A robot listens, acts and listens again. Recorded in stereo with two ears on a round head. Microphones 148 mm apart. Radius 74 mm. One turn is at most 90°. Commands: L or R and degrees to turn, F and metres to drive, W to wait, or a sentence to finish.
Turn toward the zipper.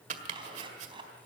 R35
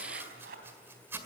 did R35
R90
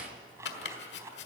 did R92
R20
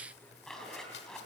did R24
Facing the zipper, 2 to 4 m away.